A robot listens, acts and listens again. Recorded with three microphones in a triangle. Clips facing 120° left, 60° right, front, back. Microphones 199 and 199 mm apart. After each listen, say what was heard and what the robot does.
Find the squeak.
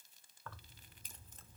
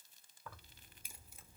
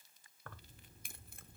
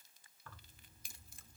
Keep listening.
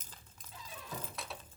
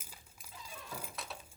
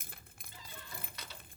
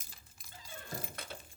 The squeak: 150° right. Turn 150° right.
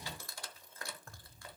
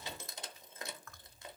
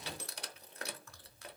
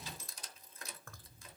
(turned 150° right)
Found it: a squeak, straight ahead, under 1 m away.